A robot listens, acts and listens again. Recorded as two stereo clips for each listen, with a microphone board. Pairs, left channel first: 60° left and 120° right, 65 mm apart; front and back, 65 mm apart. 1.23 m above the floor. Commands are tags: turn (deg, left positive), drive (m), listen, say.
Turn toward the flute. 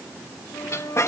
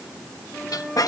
<turn deg="90"/>
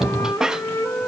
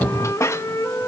<turn deg="30"/>
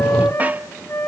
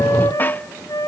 <turn deg="15"/>
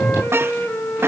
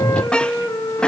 <say>Facing the flute.</say>